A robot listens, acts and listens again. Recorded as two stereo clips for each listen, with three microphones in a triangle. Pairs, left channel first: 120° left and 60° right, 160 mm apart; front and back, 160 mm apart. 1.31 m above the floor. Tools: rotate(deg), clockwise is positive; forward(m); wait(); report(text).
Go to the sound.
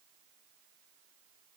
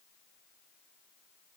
wait()
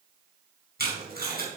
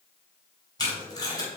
rotate(65)
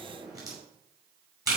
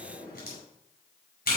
rotate(-10)
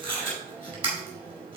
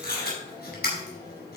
forward(1.0)
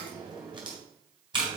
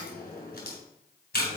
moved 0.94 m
forward(1.0)
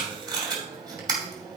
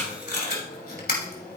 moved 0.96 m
forward(1.0)
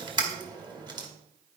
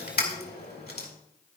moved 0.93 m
forward(1.0)
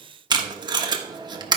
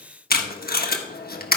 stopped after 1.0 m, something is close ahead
report("I am next to the tape being pulled.")